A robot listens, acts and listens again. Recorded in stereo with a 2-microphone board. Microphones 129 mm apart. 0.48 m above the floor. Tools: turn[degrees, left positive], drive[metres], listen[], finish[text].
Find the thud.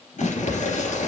Thought: The thud: about 40° right or 140° right.
Action: turn[-40]
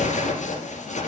Action: listen[]
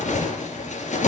Action: finish[I heard a thud, but can't make it out now. It was about straight ahead or 100° right.]